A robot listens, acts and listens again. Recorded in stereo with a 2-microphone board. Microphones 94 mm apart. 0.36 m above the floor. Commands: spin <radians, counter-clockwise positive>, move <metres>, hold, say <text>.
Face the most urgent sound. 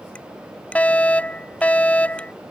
spin 0.52
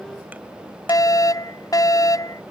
spin 2.36
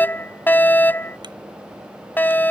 spin 0.44
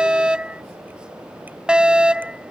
spin -0.17
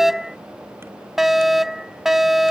say Found it: a fire alarm, straight ahead.